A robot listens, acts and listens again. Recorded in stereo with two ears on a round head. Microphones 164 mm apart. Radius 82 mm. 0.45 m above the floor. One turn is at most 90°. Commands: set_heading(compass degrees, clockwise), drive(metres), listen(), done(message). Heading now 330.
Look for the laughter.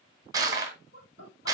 set_heading(270)
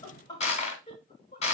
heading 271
set_heading(236)
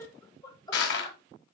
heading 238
set_heading(213)
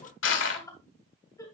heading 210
set_heading(195)
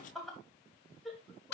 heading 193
done("Found it: laughter, straight ahead, 2 to 4 m away.")